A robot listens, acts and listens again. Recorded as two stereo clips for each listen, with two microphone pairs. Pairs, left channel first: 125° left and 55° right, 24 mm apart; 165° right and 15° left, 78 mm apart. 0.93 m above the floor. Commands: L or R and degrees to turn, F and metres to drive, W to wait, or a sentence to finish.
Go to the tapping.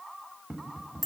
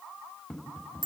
R85
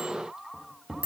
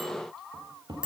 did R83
F1.0
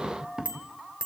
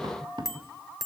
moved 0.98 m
F1.0
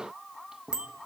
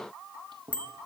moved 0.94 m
L10
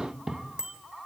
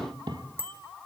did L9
F1.0
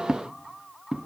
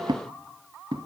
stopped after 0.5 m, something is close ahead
I am next to the tapping.